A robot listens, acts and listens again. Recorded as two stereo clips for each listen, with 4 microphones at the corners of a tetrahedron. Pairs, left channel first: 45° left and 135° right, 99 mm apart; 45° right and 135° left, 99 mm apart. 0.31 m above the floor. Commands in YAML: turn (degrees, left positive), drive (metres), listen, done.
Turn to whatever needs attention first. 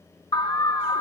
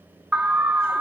turn: 60
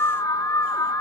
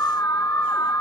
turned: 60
done: "Found it: an alarm, straight ahead."